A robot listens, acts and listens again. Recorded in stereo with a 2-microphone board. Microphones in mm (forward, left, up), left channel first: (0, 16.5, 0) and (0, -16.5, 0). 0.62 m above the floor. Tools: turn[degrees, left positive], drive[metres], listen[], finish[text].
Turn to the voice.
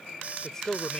Thought: The man speaking: about 15° left or 165° left.
Action: turn[15]
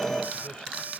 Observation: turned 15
Action: listen[]
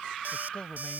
Thought: The man speaking: about 30° left or 150° left.
Action: turn[30]
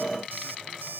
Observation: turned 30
Action: listen[]
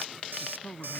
Thought: So it is at 115° left.
Action: turn[115]
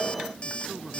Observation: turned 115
Action: listen[]
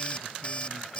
Action: listen[]
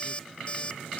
Action: finish[Facing where the man speaking came from. I can't hear it now.]